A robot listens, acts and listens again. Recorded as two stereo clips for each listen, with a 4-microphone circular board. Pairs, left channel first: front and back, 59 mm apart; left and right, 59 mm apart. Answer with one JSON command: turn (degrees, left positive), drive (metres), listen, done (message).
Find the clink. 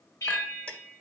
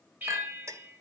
{"turn": -70}
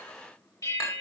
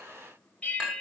{"turn": -15}
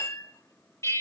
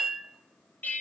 {"turn": -10}
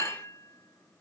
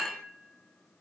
{"done": "Facing the clink."}